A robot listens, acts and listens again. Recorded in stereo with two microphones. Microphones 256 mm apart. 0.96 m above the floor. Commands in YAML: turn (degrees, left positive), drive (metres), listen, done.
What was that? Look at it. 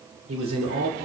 turn: -90
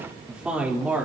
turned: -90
done: "Facing the man speaking, 2 to 4 m away."